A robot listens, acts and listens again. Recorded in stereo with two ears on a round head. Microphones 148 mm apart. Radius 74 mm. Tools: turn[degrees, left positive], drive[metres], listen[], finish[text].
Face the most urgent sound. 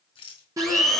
Thought: The crying: about 20° right or 160° right.
Action: turn[-20]
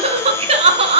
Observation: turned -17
Thought: So it is at 140° right.
Action: turn[-140]
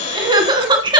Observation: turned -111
Thought: The crying is now 30° right.
Action: turn[-30]
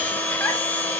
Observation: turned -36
Action: listen[]
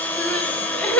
Thought: The crying is now 10° left.
Action: turn[10]
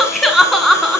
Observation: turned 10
Action: finish[Found it: crying, straight ahead, 2 to 4 m away.]